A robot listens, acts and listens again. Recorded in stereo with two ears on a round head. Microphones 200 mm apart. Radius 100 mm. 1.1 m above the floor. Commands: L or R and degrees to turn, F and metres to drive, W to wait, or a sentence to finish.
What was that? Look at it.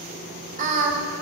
R35
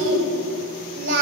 R125
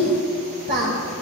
R50
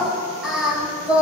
Found it: singing, straight ahead.